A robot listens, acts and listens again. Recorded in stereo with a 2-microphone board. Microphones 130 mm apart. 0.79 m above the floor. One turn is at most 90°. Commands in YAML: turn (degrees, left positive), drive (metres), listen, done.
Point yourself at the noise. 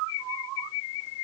listen: true
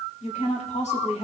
turn: 60
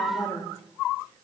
turn: 35
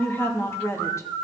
turn: 20
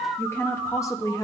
turn: 30
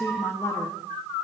turn: 25
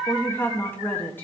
turn: 15
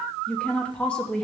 turn: 10
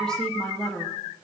done: "Found it: a woman speaking, straight ahead, 1 to 2 m away."